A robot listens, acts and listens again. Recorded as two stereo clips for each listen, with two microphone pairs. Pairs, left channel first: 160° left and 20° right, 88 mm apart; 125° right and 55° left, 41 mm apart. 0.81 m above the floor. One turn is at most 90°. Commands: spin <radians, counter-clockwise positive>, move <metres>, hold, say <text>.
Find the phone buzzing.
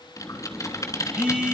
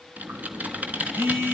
spin 1.05
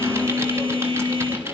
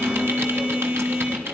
spin -0.17
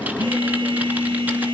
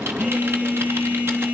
say Facing the phone buzzing.